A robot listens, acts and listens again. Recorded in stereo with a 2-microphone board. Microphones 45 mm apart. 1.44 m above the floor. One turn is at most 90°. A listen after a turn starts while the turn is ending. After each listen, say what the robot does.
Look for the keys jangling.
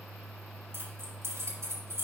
Turn 65° right.
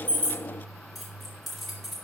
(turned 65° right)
Found it: keys jangling, straight ahead.